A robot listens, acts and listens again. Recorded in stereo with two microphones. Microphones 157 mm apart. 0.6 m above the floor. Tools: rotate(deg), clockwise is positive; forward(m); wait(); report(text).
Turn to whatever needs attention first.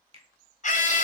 rotate(-55)
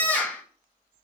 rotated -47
rotate(-10)
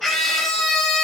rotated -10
report("Found it: a scream, straight ahead.")